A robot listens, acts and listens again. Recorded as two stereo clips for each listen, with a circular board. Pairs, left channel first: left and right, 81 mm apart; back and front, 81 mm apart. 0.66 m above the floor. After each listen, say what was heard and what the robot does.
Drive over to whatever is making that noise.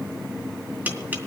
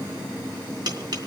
The tapping: 25° right. Turn 25° right.
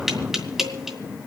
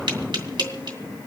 Drive 1.0 m forward.
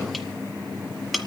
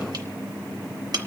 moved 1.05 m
Drive 1.0 m forward.
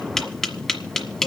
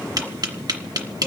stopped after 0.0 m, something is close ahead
The tapping is now 10° left. Turn 10° left.
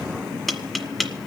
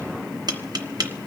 I am next to the tapping.